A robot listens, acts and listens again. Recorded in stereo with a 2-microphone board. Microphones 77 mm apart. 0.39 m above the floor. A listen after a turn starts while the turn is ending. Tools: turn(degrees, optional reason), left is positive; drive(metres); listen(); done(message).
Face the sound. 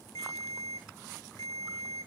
turn(degrees=60, reason="The ringtone: about 60° left or 120° left.")
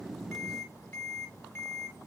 turn(degrees=35, reason="So it is at 35° left.")
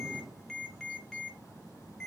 turn(degrees=10, reason="The ringtone is now 10° left.")
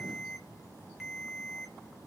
done("Facing the ringtone, 1 to 2 m away.")